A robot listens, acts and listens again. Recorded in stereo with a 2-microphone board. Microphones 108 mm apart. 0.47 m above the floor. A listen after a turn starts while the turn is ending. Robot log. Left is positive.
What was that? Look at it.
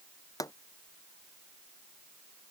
note: The pop: about 35° left or 145° left.
cmd yaw +35
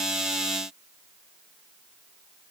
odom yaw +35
cmd idle
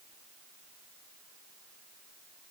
end: I heard a pop, but can't make it out now. It was about straight ahead or 110° left.